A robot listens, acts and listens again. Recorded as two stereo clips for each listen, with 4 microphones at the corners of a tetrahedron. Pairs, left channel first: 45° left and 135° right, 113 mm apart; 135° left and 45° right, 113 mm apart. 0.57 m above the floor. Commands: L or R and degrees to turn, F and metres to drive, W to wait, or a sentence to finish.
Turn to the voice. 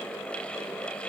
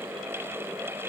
W
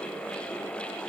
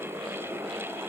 W
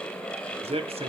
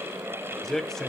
R140
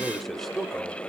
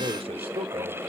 R45
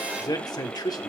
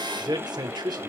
Facing the man speaking, 1 to 2 m away.